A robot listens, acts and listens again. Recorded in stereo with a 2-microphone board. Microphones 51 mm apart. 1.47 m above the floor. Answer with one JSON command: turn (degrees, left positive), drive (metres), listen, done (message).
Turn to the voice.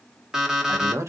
{"turn": -70}
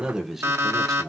{"turn": 10}
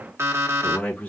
{"turn": 30}
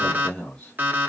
{"turn": 20}
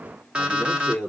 {"turn": 10}
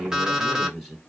{"done": "Facing the man speaking, 2 to 4 m away."}